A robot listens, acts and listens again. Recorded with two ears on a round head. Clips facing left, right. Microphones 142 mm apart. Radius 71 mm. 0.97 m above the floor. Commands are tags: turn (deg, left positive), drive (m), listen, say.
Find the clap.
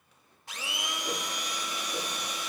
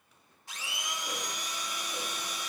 <listen/>
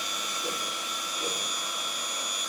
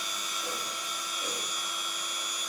<listen/>
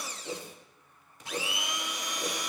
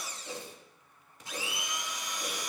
<say>I can't make out a clap to turn to.</say>